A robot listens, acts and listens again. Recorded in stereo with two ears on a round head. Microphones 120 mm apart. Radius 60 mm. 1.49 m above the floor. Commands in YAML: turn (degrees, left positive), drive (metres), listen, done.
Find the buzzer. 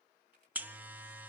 turn: -30
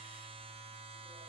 turn: -130
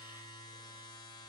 turn: 35
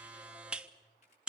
done: "Found it: a buzzer, straight ahead, 1 to 2 m away."